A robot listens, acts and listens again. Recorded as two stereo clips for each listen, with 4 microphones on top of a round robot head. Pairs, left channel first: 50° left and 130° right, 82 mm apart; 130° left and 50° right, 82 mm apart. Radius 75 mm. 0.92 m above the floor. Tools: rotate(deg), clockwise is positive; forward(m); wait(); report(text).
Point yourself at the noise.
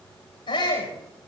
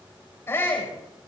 rotate(-70)
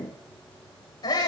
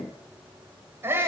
rotate(-10)
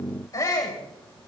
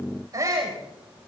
report("Found it: a shout, straight ahead, over 4 m away.")